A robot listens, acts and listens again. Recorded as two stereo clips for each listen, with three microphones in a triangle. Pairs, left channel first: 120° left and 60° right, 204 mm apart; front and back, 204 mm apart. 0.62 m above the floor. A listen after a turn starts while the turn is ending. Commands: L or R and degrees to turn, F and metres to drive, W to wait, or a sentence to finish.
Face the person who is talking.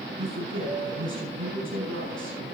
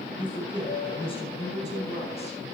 R60
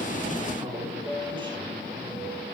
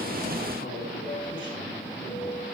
W
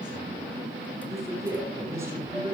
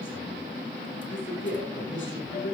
L15
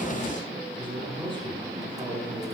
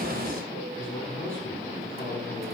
Found it: a man speaking, straight ahead, over 4 m away.